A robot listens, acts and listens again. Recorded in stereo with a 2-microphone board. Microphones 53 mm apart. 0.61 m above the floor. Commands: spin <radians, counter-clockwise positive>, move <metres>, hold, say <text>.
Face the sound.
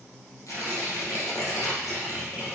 spin 1.57
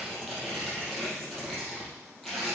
say Found it: tearing paper, straight ahead.